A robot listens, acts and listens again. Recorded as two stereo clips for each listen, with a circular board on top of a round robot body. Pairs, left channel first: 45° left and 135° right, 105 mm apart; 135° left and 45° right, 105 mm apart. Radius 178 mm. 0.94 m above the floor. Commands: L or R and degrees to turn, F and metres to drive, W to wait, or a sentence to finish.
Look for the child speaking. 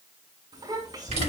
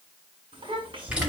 R85
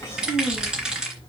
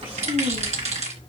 R20
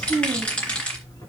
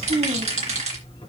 R10
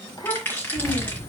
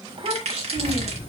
R10
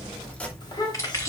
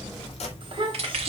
Found it: a child speaking, straight ahead.